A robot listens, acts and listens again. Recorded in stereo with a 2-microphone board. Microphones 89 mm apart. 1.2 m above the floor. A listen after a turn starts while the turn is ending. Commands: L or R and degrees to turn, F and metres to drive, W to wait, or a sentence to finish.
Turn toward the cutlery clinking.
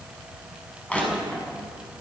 W
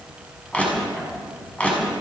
W
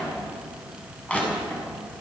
I can't make out cutlery clinking to turn to.